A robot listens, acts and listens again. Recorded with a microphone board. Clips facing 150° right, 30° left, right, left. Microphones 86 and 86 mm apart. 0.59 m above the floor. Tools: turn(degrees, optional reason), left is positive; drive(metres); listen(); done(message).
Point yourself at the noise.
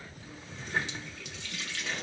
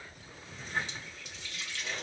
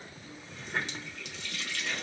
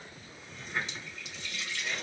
turn(degrees=-120, reason="The running tap: 120° right.")
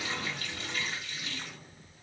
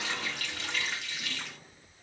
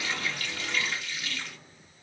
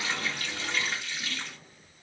turn(degrees=25, reason="The running tap is now 25° left.")
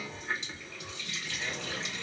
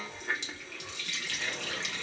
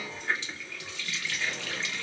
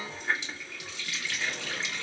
turn(degrees=15, reason="The running tap is now 15° left.")
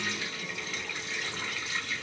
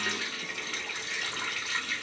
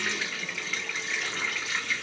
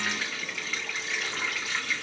done("Facing the running tap, 1 to 2 m away.")